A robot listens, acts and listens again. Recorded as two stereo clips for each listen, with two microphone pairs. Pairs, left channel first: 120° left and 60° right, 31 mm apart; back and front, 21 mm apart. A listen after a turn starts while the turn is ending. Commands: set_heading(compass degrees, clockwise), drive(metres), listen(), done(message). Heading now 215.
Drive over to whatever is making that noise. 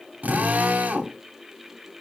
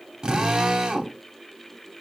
set_heading(260)
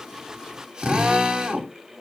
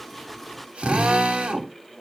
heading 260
drive(1.0)
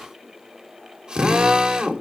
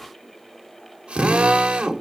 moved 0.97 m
drive(1.0)
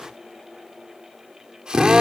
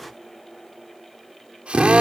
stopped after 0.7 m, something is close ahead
done("Arrived at the drill, straight ahead.")